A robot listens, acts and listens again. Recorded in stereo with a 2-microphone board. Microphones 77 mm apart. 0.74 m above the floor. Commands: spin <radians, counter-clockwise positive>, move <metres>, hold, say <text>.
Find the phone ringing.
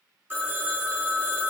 spin -0.44
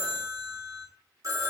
spin -2.27
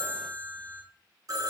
spin -0.87
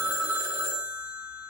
spin -0.17
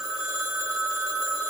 say Facing the phone ringing.